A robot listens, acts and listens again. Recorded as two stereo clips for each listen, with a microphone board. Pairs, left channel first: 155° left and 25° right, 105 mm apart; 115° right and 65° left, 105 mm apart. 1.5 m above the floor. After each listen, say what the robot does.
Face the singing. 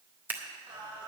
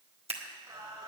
Turn 15° left.
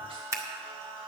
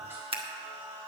Found it: singing, straight ahead, 2 to 4 m away.